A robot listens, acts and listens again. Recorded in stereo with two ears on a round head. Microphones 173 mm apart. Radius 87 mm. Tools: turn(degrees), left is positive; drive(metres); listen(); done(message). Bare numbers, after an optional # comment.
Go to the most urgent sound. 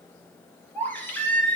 turn(30)
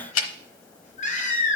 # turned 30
# So it is at 140° left.
turn(140)
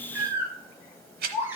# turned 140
# The baby crying is now 10° right.
turn(-10)
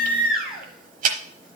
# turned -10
drive(1.0)
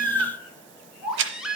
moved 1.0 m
drive(1.0)
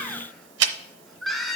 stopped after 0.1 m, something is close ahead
done("I am next to the baby crying.")